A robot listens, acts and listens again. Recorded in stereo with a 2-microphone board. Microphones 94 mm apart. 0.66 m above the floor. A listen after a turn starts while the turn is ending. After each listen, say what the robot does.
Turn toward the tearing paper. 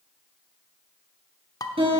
Keep listening.
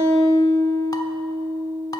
Keep listening.
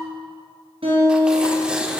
Turn 30° right.
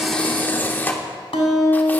Turn 20° left.
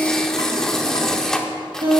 Facing the tearing paper, 1 to 2 m away.